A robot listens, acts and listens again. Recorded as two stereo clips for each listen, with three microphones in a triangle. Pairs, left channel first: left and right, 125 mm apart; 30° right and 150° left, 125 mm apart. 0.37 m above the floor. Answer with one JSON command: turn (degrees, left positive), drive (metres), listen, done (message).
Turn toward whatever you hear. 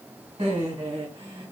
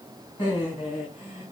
{"turn": -70}
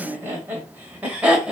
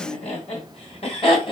{"turn": -10}
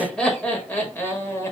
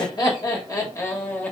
{"turn": 35}
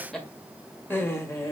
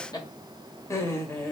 {"turn": 35}
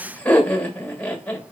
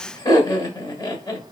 {"turn": 15}
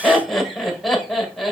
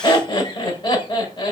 {"done": "Found it: laughter, straight ahead, 1 to 2 m away."}